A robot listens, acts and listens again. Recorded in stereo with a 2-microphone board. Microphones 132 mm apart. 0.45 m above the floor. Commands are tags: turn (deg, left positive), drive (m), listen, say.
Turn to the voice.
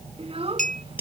<turn deg="-50"/>
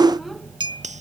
<listen/>
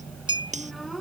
<listen/>
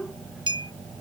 <say>I heard a child speaking, but can't make it out now. It was about straight ahead or 80° right.</say>